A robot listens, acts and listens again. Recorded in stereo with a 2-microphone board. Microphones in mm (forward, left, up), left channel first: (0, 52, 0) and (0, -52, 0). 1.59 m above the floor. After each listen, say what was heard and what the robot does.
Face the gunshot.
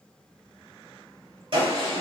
The gunshot: about 55° right or 125° right. Turn 55° right.
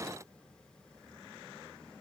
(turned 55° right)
Keep listening.
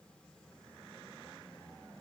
I heard a gunshot, but can't make it out now. It was about straight ahead or 70° right.